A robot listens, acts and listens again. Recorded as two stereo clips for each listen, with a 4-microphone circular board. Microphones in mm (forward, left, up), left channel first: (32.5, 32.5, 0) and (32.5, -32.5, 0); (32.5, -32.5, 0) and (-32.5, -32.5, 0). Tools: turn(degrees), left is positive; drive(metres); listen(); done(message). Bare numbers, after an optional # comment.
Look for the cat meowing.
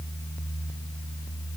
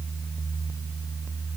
listen()
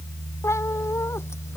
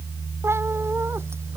# The cat meowing: 135° left.
turn(135)
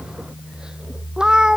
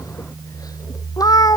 # The cat meowing is now 10° right.
turn(-10)
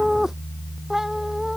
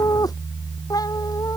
done("Found it: a cat meowing, straight ahead.")